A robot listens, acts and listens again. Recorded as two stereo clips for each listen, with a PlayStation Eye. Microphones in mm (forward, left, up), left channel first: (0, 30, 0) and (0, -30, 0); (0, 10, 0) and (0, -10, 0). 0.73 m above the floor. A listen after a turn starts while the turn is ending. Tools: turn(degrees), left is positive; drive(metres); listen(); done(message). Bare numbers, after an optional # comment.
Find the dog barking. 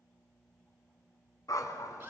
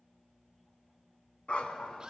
# The dog barking: about 70° left or 110° left.
turn(70)
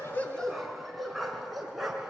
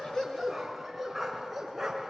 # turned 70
done("Found it: a dog barking, straight ahead, 2 to 4 m away.")